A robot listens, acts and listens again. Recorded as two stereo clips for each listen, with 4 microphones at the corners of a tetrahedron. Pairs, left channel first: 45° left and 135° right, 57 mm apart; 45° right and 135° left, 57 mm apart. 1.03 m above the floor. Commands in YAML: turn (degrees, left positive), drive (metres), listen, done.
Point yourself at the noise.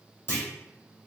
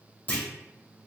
turn: 15
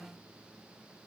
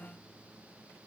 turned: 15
done: "Facing where the clunk came from. I can't hear it now."